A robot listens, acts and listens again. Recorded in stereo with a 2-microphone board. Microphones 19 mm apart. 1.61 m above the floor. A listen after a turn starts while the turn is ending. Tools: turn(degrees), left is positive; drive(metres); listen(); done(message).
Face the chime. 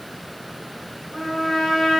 listen()
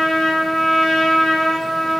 listen()
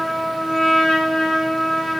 done("I can't make out a chime, only a trumpet.")